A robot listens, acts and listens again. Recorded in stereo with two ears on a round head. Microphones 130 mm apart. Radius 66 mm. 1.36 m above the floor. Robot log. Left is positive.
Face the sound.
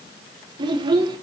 note: The child speaking: about 35° right or 145° right.
cmd yaw -35
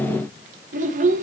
note: So it is at 110° right.
cmd yaw -110
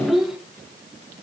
end: Found it: a child speaking, straight ahead, under 1 m away.